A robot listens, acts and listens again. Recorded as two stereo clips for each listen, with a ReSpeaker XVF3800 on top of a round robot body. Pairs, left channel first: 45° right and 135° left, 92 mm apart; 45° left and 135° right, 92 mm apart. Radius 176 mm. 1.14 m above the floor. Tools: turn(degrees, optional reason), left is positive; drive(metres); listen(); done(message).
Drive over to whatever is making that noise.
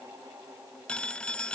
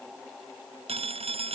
turn(degrees=-125, reason="The phone ringing: 125° right.")
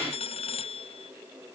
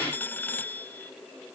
turn(degrees=-25, reason="The phone ringing is now 25° right.")
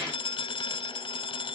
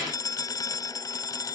turn(degrees=-10, reason="The phone ringing is now 10° right.")
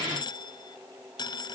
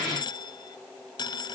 drive(metres=1.0)
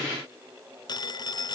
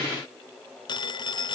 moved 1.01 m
drive(metres=1.0)
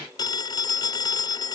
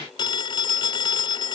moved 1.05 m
drive(metres=1.0)
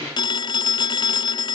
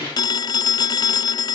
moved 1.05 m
drive(metres=1.0)
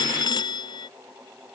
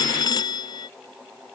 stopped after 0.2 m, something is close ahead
done("I am next to the phone ringing.")